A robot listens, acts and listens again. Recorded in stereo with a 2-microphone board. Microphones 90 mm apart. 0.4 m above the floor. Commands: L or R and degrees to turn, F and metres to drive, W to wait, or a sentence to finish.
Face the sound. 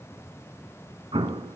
R90
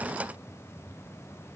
Facing where the explosion came from. I can't hear it now.